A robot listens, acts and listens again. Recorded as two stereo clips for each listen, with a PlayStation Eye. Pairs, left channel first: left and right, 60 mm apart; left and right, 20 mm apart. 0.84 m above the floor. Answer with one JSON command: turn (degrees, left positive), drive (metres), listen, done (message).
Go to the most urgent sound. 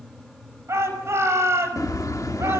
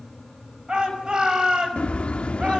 {"turn": -50}
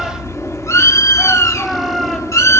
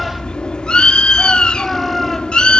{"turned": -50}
{"listen": true}
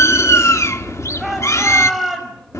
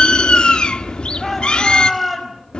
{"drive": 1.0}
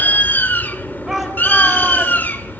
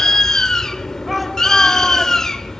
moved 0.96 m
{"listen": true}
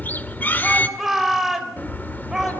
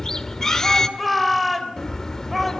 {"drive": 1.0}
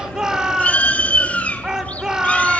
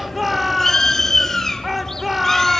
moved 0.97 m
{"turn": -10}
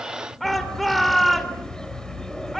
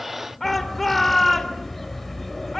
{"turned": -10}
{"drive": 1.0}
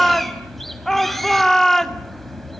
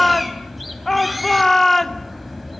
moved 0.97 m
{"turn": 10}
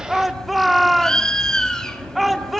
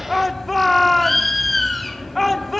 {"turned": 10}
{"drive": 1.0}
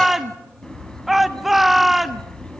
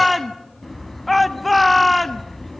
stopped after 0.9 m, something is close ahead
{"done": "Arrived at the shout, straight ahead."}